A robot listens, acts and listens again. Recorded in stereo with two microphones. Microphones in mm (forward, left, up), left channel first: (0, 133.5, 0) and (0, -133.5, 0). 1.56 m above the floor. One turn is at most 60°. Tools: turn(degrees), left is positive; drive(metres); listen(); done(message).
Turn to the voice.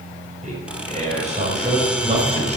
turn(degrees=-25)
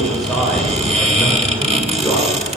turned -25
done("Found it: a man speaking, straight ahead, over 4 m away.")